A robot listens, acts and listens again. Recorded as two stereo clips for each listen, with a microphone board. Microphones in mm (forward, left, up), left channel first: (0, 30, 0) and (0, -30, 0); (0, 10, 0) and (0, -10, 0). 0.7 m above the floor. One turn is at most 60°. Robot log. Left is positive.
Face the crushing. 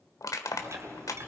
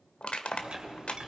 note: The crushing: about 75° left or 105° left.
cmd yaw +60
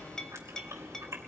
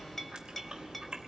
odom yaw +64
cmd idle
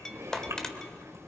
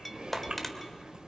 cmd idle
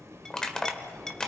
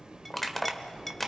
note: So it is at 10° left.
cmd yaw +10
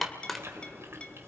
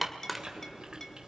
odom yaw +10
end: Found it: crushing, straight ahead, 1 to 2 m away.